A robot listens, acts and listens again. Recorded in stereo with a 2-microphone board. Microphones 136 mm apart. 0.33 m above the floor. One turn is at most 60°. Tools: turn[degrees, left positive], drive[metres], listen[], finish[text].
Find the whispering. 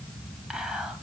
Action: turn[-30]
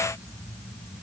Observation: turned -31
Action: listen[]
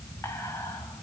Thought: So it is at 25° left.
Action: turn[25]
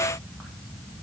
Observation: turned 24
Action: listen[]
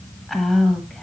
Action: finish[Facing the whispering, 1 to 2 m away.]